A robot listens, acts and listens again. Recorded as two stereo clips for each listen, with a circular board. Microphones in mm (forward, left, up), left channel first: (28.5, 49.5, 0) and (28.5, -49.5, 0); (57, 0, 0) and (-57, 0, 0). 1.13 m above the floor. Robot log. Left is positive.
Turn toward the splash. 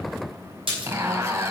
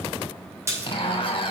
note: The splash: 115° right.
cmd yaw -115
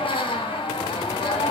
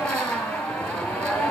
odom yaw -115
end: I heard a splash from this way, but can't make it out now.